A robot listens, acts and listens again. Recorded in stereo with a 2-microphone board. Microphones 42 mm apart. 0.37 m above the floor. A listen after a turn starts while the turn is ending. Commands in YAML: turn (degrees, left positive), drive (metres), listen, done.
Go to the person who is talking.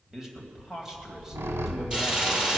turn: -30
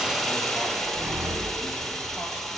listen: true
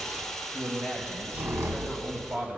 turn: -140
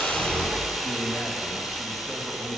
turn: 30
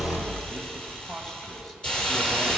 drive: 1.0
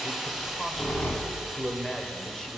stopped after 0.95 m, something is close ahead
turn: 20
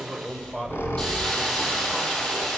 turn: 10
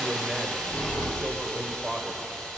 done: "I am next to the man speaking."